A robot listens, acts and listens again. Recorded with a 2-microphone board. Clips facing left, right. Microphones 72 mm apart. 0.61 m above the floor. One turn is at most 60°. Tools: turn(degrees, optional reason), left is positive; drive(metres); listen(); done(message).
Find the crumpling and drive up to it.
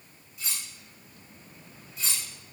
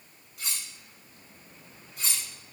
listen()
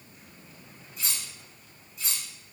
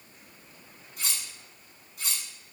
listen()
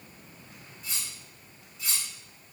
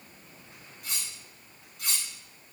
done("I can't make out crumpling, only cutlery clinking.")